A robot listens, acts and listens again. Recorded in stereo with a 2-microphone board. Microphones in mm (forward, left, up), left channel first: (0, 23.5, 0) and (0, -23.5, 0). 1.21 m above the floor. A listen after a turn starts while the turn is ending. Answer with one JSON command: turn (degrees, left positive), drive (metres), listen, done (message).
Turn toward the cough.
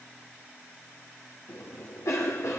{"turn": 90}
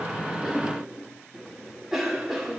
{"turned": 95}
{"turn": -10}
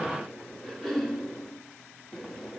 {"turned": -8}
{"done": "Found it: a cough, straight ahead."}